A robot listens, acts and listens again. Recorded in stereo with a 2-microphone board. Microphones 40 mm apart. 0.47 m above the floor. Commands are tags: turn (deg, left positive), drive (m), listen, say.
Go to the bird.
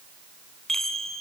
<listen/>
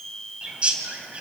<turn deg="-30"/>
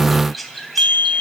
<drive m="1.0"/>
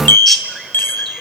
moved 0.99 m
<drive m="1.0"/>
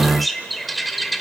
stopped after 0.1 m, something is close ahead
<say>I am next to the bird.</say>